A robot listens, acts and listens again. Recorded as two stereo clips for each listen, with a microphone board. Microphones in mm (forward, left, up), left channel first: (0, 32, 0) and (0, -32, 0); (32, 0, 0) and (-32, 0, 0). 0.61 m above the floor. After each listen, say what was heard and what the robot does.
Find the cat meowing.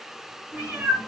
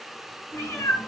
The cat meowing: 30° right. Turn 30° right.
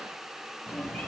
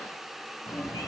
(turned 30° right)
The cat meowing is now 15° left. Turn 15° left.
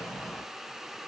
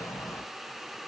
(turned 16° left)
The cat meowing is now 10° left. Turn 10° left.
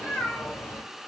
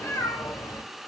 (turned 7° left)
The cat meowing is now 30° left. Turn 30° left.
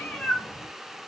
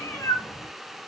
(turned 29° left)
The cat meowing is now 10° left. Turn 10° left.
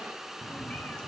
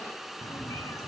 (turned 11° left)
The cat meowing is now 15° left. Turn 15° left.
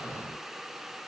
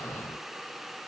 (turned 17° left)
Keep listening.
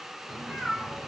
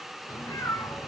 Found it: a cat meowing, straight ahead, 1 to 2 m away.